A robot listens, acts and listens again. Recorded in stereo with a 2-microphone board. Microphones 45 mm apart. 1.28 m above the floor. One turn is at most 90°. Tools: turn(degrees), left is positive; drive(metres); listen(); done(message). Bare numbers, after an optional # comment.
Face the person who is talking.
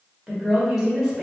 turn(-30)
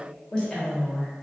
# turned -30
# So it is at 20° left.
turn(20)
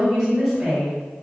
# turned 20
done("Facing the woman speaking.")